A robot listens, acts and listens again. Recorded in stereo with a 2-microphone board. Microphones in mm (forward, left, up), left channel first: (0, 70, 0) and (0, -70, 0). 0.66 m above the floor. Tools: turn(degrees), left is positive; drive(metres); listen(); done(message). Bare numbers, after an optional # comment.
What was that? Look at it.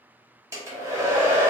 # The hair dryer: about 20° right or 160° right.
turn(-20)
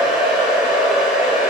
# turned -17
done("Facing the hair dryer.")